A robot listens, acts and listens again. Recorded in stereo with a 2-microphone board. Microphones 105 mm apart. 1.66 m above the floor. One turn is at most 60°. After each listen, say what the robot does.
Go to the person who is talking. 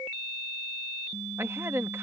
Turn 25° right.
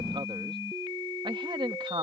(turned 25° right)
Turn 60° right.
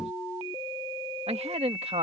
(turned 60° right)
Turn 60° right.
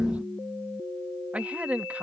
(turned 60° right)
Turn 15° right.
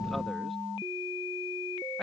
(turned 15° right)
Keep listening.
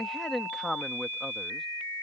Drive 1.0 m forward.
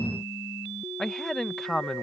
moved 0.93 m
Drive 1.0 m forward.
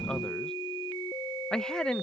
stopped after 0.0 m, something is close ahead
Arrived at the man speaking, straight ahead.